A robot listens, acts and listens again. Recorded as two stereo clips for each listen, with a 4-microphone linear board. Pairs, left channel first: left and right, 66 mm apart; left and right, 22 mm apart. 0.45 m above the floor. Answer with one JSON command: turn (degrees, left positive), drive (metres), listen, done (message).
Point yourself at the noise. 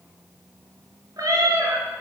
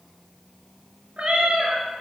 {"turn": -65}
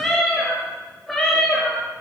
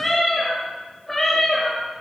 {"done": "Found it: a cat meowing, straight ahead."}